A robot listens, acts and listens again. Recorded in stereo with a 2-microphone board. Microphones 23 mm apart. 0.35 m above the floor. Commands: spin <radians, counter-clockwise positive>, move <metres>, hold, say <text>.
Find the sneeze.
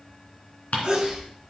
spin -0.61
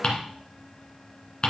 hold
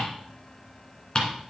say I heard a sneeze, but can't make it out now. It was about straight ahead or 110° right.